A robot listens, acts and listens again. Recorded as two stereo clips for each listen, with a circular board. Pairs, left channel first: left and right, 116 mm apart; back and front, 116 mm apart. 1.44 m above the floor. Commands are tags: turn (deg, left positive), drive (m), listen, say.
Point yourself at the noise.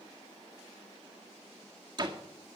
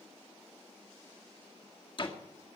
<turn deg="-140"/>
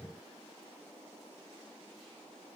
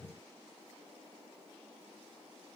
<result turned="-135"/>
<say>Facing where the door slam came from. I can't hear it now.</say>